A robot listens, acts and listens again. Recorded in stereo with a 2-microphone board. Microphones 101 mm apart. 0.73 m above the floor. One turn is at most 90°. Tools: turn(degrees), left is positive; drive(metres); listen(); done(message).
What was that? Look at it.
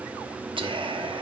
turn(degrees=-60)
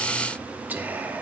turn(degrees=-20)
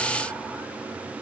listen()
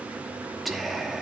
done("Found it: whispering, straight ahead.")